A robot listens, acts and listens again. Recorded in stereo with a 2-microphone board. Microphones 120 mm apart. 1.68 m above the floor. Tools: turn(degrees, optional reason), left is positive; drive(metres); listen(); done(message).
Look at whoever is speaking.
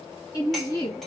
turn(degrees=35, reason="The woman speaking: about 35° left or 145° left.")
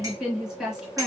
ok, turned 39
done("Facing the woman speaking, 1 to 2 m away.")